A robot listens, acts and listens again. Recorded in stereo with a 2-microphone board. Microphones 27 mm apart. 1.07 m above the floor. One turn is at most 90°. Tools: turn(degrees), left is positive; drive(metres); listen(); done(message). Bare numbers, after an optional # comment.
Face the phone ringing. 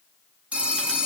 # The phone ringing: about 55° right or 125° right.
turn(-55)
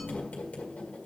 listen()
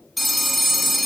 done("Facing the phone ringing, 1 to 2 m away.")